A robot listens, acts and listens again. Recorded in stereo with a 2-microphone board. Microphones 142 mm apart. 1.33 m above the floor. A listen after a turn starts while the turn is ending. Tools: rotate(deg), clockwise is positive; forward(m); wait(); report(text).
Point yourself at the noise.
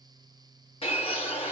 rotate(-40)
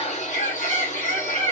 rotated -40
rotate(-90)
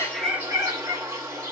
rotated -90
rotate(25)
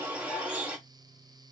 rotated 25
rotate(10)
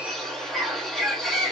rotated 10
report("Found it: a bird, straight ahead.")